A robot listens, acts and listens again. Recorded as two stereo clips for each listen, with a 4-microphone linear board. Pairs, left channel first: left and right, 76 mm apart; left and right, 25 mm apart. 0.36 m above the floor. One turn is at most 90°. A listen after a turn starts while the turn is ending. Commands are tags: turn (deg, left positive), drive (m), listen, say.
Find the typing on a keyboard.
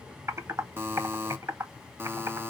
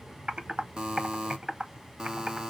<turn deg="-40"/>
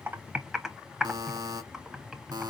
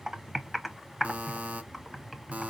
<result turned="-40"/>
<say>Facing the typing on a keyboard.</say>